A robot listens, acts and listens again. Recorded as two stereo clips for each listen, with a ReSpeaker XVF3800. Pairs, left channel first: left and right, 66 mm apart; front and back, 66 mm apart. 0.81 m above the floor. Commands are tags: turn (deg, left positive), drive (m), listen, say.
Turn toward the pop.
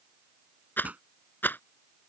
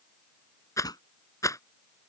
<turn deg="-20"/>
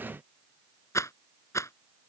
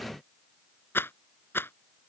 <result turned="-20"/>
<say>Facing where the pop came from. I can't hear it now.</say>